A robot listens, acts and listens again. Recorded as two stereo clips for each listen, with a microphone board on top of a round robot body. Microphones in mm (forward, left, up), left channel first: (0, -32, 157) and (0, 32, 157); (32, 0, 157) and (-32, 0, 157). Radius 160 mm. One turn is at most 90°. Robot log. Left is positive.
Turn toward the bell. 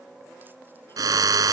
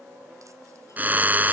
cmd idle
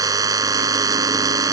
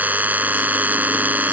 cmd idle
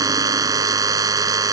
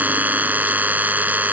end: I can't make out a bell to turn to.